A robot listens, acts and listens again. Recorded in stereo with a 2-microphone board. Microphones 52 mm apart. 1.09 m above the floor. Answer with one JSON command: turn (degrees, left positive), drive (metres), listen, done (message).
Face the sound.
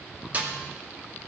{"turn": -30}
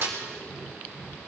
{"turn": -120}
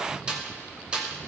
{"turn": -20}
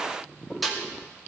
{"done": "Facing the snare drum, 2 to 4 m away."}